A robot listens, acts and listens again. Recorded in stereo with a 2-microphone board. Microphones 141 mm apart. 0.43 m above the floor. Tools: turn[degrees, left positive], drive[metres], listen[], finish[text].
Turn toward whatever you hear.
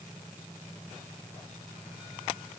Action: listen[]
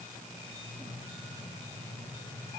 Action: listen[]
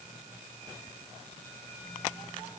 Action: finish[I can't make out anything to turn to.]